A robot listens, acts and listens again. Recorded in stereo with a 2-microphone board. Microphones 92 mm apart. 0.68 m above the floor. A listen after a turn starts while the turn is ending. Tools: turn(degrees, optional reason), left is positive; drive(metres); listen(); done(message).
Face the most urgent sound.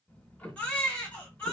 turn(degrees=20, reason="The baby crying: about 20° left or 160° left.")
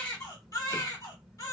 turn(degrees=140, reason="So it is at 140° left.")
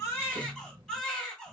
done("Facing the baby crying, 1 to 2 m away.")